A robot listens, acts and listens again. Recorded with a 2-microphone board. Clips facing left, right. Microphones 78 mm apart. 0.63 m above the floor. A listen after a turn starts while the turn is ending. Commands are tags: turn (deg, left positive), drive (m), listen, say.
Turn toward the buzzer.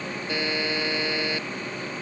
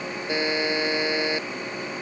<turn deg="-20"/>
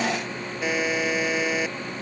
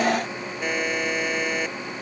<say>Found it: a buzzer, straight ahead.</say>